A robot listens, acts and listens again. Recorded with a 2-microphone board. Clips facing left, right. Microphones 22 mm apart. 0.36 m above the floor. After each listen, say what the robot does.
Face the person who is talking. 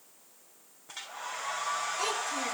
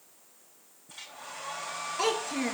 Turn 20° right.
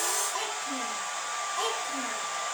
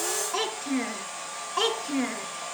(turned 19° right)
Turn 130° right.
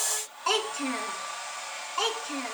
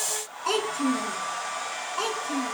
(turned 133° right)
Turn 20° left.
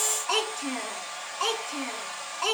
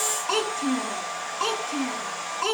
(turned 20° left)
Found it: a child speaking, straight ahead.